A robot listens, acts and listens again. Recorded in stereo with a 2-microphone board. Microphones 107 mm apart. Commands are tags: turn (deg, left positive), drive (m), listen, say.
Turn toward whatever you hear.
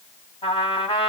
<turn deg="60"/>
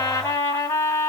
<turn deg="30"/>
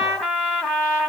<say>Facing the trumpet, 1 to 2 m away.</say>